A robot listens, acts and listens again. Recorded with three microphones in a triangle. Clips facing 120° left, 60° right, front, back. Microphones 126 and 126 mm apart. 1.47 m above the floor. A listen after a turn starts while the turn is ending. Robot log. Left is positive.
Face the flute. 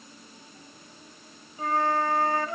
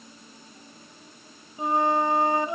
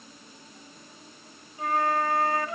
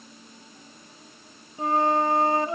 note: The flute: 125° right.
cmd yaw -125
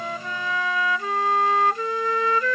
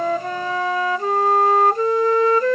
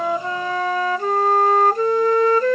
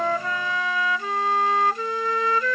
note: The flute is now 25° right.
cmd yaw -25
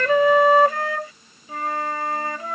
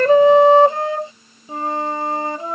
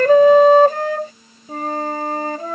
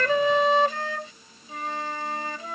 end: Found it: a flute, straight ahead.